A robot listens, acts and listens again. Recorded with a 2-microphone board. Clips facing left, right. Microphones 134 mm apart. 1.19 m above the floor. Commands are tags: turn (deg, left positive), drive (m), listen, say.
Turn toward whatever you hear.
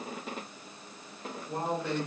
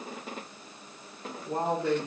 <turn deg="-70"/>
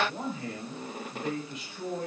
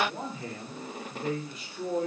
<turn deg="-40"/>
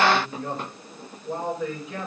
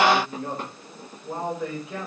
<say>Facing the man speaking.</say>